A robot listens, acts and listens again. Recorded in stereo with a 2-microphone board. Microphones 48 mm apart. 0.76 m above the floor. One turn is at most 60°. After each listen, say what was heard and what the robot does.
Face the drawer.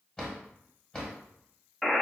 The drawer: about 20° left or 160° left. Turn 20° left.
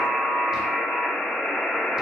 Keep listening.
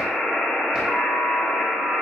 Keep listening.
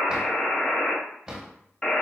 Facing the drawer, 1 to 2 m away.